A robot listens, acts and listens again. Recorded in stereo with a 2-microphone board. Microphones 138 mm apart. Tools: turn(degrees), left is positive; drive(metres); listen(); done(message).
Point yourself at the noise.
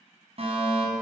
turn(degrees=-45)
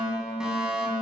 done("Found it: a fire alarm, straight ahead.")